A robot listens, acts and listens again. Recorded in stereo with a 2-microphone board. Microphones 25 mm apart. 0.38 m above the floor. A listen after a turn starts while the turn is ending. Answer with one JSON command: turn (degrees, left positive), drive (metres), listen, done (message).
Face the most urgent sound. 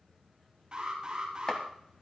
{"turn": -30}
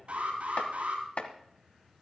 {"turn": -115}
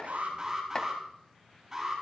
{"turn": -25}
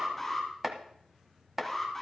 {"turn": 10}
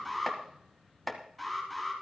{"done": "Found it: an alarm, straight ahead."}